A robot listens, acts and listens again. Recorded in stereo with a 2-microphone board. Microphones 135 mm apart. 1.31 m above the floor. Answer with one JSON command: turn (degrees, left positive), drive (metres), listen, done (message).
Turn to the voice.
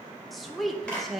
{"turn": 30}
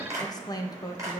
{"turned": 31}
{"turn": 150}
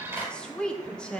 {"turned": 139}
{"turn": 10}
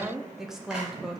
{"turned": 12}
{"done": "Facing the woman speaking, under 1 m away."}